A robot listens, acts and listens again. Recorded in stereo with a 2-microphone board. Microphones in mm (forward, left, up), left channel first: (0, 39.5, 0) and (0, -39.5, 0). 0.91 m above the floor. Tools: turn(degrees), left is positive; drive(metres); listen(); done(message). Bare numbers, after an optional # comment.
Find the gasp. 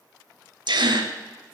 # The gasp: about 70° right or 110° right.
turn(-70)
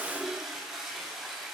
listen()
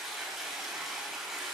done("I heard a gasp, but can't make it out now. It was about straight ahead or 40° right.")